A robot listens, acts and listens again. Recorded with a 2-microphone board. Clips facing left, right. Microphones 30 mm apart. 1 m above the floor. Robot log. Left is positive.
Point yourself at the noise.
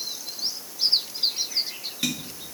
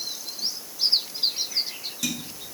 note: The tapping: about 35° left or 145° left.
cmd yaw +35
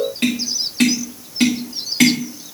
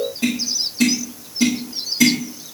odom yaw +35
note: So it is at 110° left.
cmd yaw +110
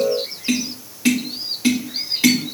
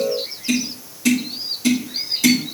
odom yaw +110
note: The tapping is now 35° left.
cmd yaw +35
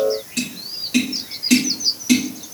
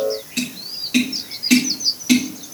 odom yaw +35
note: The tapping is now 15° right.
cmd yaw -15
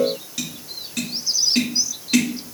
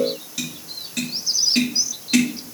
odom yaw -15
end: Facing the tapping.